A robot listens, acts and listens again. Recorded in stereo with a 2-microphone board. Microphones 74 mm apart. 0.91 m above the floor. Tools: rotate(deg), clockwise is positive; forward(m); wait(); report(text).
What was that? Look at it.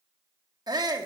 rotate(65)
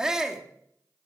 rotate(10)
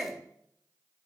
report("Facing the shout, 1 to 2 m away.")